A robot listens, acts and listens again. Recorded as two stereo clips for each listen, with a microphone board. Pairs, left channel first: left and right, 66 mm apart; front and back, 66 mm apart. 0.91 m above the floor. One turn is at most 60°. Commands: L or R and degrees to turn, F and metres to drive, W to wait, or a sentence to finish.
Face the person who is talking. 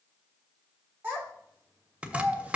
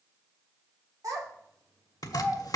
R60
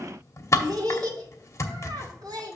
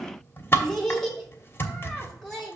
R60
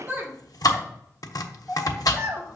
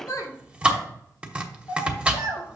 R25
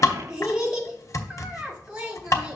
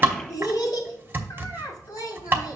R10
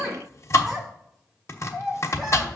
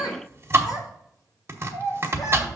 Facing the child speaking, 2 to 4 m away.